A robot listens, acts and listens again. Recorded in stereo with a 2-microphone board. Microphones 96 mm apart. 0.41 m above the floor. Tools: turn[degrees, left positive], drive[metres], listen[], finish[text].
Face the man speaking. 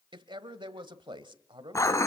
Thought: The man speaking: about 55° right or 125° right.
Action: turn[-55]
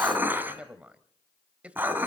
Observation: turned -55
Thought: So it is at 15° right.
Action: turn[-15]
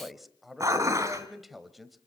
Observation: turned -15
Action: finish[Found it: a man speaking, straight ahead.]